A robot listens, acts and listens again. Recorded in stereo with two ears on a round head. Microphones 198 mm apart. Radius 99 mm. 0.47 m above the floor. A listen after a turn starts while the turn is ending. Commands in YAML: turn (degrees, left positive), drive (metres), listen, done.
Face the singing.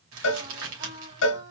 turn: -35
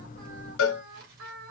turn: -115
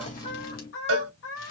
turn: 65
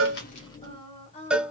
turn: 30
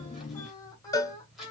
turn: 15
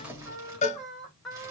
done: "Found it: singing, straight ahead."